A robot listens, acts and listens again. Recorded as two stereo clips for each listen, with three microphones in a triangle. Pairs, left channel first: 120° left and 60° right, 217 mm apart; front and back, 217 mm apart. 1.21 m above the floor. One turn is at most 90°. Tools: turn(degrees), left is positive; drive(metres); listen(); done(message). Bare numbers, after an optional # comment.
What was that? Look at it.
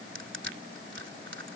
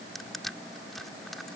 # The crushing: 90° right.
turn(-90)
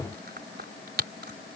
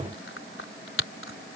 # The crushing is now 20° right.
turn(-20)
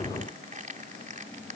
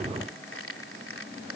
done("Facing the crushing.")